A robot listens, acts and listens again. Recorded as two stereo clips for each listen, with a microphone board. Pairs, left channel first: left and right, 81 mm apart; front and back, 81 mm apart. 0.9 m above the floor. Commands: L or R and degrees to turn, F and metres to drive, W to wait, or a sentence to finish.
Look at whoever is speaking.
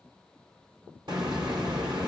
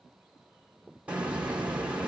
W
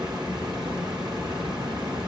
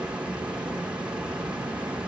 W
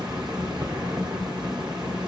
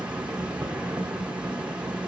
I can't make out anyone speaking, only a hiss.